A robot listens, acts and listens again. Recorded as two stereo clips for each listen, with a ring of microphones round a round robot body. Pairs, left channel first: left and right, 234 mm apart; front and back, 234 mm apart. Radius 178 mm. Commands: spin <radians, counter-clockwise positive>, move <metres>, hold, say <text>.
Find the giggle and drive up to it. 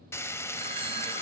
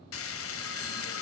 hold
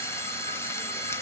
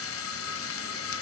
hold
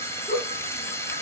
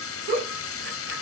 spin 2.53
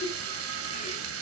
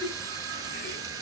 hold
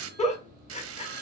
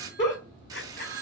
spin 0.52
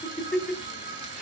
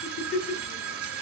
move 1.0
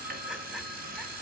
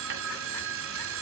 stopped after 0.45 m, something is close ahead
hold
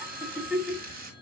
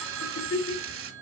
say Something is in my way. I am facing the giggle but have not reached it.